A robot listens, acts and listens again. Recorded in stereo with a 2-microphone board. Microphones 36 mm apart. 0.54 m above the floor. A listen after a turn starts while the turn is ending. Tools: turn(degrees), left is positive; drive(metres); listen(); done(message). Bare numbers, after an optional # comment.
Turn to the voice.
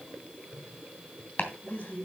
# The man speaking: about 45° left or 135° left.
turn(45)
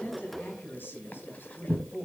# So it is at 90° left.
turn(90)
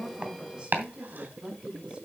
# The man speaking is now 25° right.
turn(-25)
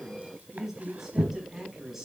# The man speaking is now 10° right.
turn(-10)
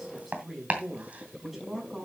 done("Found it: a man speaking, straight ahead.")